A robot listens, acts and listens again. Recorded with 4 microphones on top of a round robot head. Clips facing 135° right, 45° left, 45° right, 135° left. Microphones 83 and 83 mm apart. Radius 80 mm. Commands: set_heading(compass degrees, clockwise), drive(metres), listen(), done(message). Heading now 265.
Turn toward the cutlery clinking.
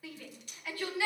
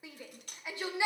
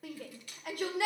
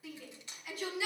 set_heading(195)
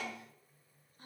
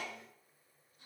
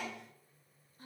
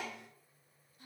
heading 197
listen()
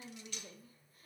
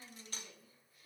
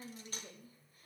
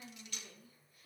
done("Found it: cutlery clinking, straight ahead, under 1 m away.")